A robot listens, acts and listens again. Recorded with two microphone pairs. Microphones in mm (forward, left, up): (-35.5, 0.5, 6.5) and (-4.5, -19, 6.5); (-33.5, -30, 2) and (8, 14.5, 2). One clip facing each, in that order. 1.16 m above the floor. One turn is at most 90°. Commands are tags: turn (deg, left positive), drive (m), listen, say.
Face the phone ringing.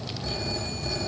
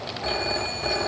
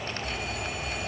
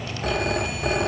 <turn deg="15"/>
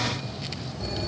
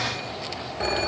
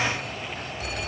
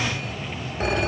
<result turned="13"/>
<say>Facing the phone ringing.</say>